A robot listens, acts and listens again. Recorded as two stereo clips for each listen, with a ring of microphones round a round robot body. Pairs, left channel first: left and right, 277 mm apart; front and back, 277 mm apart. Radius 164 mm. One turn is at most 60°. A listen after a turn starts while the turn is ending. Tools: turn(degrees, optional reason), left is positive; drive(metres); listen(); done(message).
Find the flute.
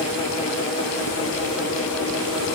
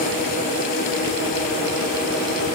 listen()
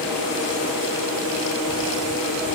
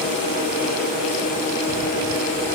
listen()
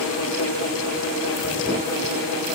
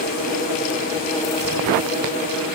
done("I can't make out a flute.")